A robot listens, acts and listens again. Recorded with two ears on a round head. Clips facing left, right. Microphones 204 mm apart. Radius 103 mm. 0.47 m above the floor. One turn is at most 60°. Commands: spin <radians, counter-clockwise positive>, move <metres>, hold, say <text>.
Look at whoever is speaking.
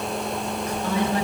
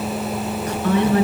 spin -0.79
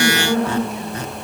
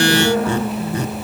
say Found it: a woman speaking, straight ahead.